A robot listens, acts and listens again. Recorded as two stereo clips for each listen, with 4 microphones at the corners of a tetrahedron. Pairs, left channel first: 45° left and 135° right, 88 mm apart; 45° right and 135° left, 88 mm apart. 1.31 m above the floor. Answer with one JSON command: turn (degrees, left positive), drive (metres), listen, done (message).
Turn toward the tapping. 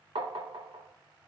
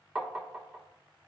{"turn": -140}
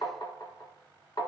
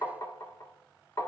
{"turn": 10}
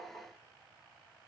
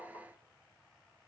{"done": "Facing the tapping, 1 to 2 m away."}